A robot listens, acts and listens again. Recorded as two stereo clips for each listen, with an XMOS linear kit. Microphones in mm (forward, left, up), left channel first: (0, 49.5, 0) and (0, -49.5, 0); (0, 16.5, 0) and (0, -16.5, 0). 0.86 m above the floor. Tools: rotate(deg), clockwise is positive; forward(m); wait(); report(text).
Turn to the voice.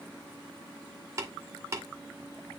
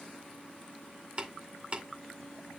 wait()
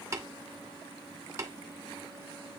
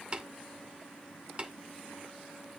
wait()
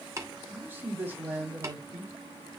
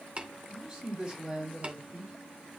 rotate(20)
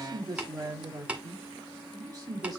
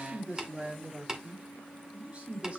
rotate(140)
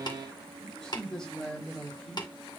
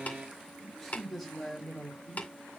report("Facing the man speaking, 2 to 4 m away.")